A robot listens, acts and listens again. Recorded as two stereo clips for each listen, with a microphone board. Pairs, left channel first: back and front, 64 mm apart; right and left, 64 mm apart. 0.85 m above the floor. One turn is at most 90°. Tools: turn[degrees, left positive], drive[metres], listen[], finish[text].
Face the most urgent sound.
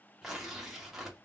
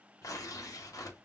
Action: listen[]
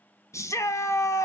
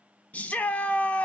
Thought: The shout: 155° right.
Action: turn[-90]
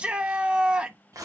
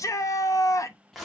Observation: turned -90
Thought: The shout is now 70° right.
Action: turn[-70]
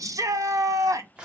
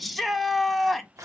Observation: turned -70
Action: finish[Found it: a shout, straight ahead, under 1 m away.]